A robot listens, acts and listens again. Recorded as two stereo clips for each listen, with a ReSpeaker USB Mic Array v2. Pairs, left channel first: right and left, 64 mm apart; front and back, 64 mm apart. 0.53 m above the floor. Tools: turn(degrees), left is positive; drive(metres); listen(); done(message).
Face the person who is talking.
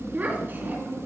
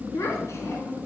turn(degrees=35)
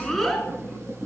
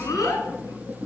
done("Facing the child speaking, 2 to 4 m away.")